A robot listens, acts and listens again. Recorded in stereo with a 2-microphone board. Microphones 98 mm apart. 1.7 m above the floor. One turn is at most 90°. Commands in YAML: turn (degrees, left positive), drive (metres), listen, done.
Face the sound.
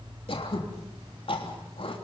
turn: 65
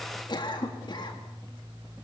turn: 50
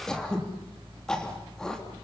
done: "Facing the throat clearing, 2 to 4 m away."